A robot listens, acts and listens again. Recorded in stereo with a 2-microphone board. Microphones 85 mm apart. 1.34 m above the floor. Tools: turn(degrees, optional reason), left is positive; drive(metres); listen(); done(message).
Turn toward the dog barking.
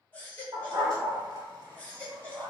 turn(degrees=-55, reason="The dog barking: about 55° right or 125° right.")
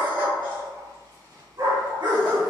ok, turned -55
turn(degrees=-60, reason="So it is at 60° right.")
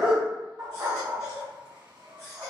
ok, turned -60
turn(degrees=-15, reason="The dog barking is now 15° right.")
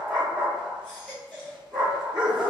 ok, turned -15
done("Facing the dog barking.")